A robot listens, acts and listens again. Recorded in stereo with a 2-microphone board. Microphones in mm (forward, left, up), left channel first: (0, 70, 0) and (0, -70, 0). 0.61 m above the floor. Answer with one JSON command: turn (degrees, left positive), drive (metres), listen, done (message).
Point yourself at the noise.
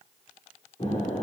{"turn": 55}
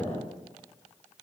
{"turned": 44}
{"turn": 75}
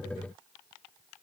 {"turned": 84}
{"turn": -10}
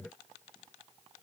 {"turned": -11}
{"done": "I heard an explosion from this way, but can't make it out now."}